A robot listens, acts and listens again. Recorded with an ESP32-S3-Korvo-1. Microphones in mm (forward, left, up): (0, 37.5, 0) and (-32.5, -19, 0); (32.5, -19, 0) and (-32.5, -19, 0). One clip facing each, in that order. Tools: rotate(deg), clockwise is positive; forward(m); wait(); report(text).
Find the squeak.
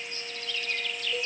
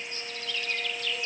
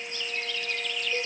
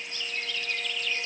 wait()
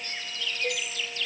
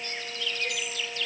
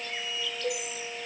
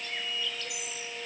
wait()
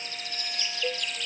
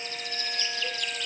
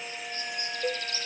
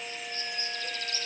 report("I can't make out a squeak.")